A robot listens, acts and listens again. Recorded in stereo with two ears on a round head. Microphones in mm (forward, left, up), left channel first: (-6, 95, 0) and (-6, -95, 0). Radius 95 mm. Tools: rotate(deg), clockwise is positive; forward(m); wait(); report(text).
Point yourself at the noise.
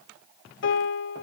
rotate(-60)
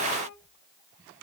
wait()
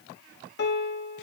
rotate(-55)
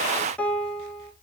report("Found it: a piano, straight ahead.")